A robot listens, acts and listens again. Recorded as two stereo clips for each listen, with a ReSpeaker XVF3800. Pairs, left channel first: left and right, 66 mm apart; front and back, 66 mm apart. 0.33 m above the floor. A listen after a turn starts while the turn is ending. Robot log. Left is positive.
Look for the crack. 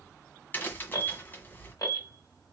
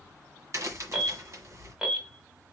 note: The crack: 145° left.
cmd yaw +145
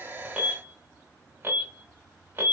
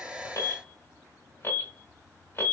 end: I heard a crack from this way, but can't make it out now.